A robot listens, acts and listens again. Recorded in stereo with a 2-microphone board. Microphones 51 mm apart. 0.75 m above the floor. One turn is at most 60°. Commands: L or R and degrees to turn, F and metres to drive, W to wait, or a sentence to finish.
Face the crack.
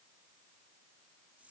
W
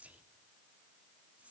W
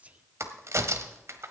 R60
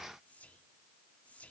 W
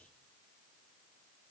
I heard a crack, but can't make it out now. It was about 10° right or 50° right.